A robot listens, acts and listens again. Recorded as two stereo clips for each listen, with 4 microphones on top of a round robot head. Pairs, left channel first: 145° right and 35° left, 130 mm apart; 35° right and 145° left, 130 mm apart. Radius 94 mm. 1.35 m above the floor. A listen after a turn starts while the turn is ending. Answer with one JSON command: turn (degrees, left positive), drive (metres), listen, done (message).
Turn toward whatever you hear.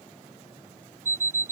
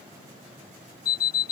{"turn": -40}
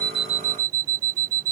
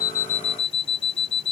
{"turn": 15}
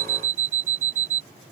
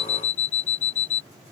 {"done": "Found it: an alarm clock, straight ahead."}